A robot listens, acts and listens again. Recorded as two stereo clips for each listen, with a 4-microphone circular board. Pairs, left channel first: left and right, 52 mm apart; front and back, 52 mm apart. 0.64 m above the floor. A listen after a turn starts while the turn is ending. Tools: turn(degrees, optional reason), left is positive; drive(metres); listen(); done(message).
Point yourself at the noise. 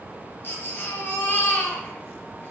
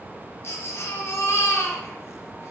turn(degrees=40, reason="The baby crying: 40° left.")
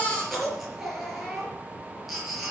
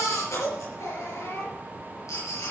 done("Found it: a baby crying, straight ahead, over 4 m away.")